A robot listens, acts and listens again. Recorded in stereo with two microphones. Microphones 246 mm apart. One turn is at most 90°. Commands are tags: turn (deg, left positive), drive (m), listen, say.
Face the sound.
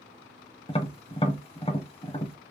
<turn deg="25"/>
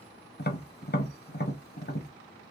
<turn deg="90"/>
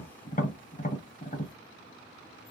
<turn deg="35"/>
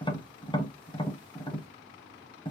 <turn deg="20"/>
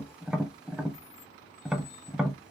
<say>Found it: tapping, straight ahead.</say>